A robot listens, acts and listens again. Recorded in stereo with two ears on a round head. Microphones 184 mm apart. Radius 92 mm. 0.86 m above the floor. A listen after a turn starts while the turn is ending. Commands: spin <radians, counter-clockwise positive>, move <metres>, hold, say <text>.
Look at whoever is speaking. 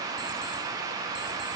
hold
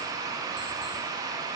hold
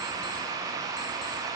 say I can't make out anyone speaking to turn to.